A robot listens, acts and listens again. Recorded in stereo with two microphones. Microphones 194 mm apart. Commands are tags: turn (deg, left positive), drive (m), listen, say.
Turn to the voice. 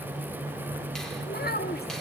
<turn deg="55"/>
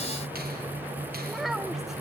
<say>Found it: a child speaking, straight ahead, 1 to 2 m away.</say>